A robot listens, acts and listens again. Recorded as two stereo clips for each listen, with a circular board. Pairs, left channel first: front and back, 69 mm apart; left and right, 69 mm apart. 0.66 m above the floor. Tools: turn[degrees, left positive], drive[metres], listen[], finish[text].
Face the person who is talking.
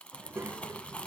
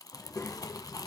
Thought: The child speaking: 140° left.
Action: turn[140]
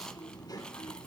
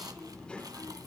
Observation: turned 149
Thought: The child speaking is now 30° left.
Action: turn[30]
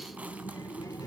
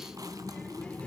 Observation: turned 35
Thought: The child speaking is now 25° left.
Action: turn[25]
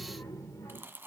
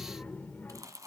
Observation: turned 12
Thought: The child speaking is now 30° left.
Action: turn[30]
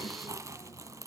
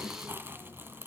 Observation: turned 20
Thought: The child speaking is now 25° left.
Action: turn[25]
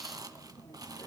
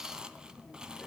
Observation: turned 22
Action: finish[Found it: a child speaking, straight ahead.]